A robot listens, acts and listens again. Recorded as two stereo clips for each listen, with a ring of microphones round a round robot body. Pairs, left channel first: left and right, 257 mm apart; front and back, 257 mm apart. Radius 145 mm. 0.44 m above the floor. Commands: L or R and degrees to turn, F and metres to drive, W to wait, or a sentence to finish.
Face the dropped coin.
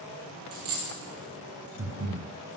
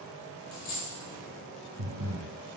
R60
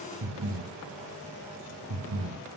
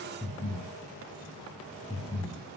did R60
Facing where the dropped coin came from. I can't hear it now.